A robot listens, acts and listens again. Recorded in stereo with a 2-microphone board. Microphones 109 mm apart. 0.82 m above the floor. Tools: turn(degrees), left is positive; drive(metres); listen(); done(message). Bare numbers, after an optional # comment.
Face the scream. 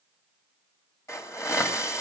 listen()
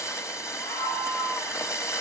# The scream: about 25° left or 155° left.
turn(25)
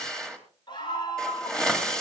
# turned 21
# So it is at 135° left.
turn(135)
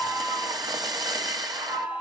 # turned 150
# The scream is now 15° right.
turn(-15)
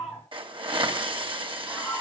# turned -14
done("Found it: a scream, straight ahead, over 4 m away.")